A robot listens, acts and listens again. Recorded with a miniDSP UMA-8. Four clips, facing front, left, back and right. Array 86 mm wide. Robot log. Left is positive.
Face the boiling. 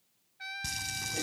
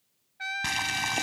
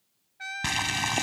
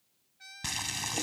note: The boiling: 155° left.
cmd yaw +155
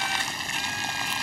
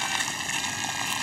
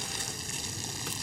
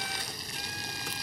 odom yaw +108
note: The boiling is now 45° left.
cmd yaw +45
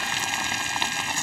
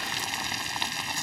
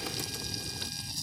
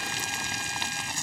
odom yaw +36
note: The boiling is now 10° left.
cmd yaw +10
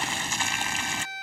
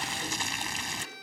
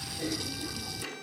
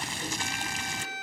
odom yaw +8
end: Facing the boiling.